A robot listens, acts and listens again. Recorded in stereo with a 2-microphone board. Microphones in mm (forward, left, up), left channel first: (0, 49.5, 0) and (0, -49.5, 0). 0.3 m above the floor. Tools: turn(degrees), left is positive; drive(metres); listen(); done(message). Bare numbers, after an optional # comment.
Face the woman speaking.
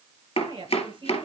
# The woman speaking: about 55° right or 125° right.
turn(-55)
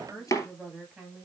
done("Found it: a woman speaking, straight ahead, over 4 m away.")